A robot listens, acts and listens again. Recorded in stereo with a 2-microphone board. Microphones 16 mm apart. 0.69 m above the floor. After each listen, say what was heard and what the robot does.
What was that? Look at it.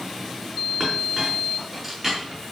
Turn 30° left.
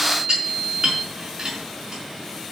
So it is at 35° right. Turn 35° right.
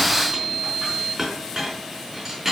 Found it: a clink, straight ahead.